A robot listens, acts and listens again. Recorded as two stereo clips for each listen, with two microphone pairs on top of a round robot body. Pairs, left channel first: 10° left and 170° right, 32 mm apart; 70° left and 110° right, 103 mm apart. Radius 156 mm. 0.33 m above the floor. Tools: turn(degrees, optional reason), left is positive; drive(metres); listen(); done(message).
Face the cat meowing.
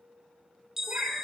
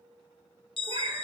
turn(degrees=-135, reason="The cat meowing: 135° right.")
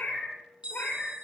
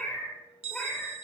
turn(degrees=-10, reason="The cat meowing is now 10° right.")
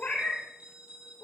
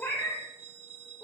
done("Found it: a cat meowing, straight ahead.")